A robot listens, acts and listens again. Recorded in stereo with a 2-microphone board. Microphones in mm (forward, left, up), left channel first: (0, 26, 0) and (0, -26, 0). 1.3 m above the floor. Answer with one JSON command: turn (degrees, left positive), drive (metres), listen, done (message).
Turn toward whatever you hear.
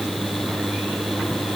{"listen": true}
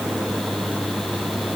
{"listen": true}
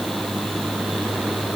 {"done": "I can't make out anything to turn to."}